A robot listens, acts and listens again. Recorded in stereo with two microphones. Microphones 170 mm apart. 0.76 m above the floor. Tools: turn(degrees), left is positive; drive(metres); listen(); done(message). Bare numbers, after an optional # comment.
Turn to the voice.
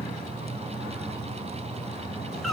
listen()
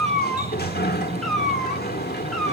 listen()
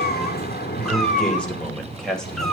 turn(30)
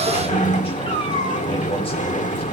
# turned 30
listen()
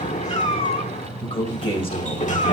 # So it is at 150° left.
turn(150)
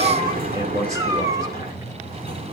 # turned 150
listen()
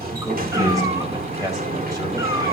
# The man speaking is now 20° right.
turn(-20)
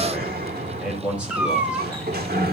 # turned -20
done("Facing the man speaking.")